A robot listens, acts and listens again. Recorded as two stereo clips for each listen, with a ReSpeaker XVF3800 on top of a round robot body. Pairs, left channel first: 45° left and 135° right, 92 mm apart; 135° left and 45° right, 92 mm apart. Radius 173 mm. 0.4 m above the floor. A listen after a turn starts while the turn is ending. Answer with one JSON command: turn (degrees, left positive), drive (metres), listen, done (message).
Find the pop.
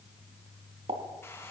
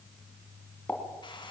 {"turn": -150}
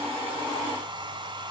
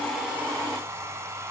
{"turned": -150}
{"done": "Facing where the pop came from. I can't hear it now."}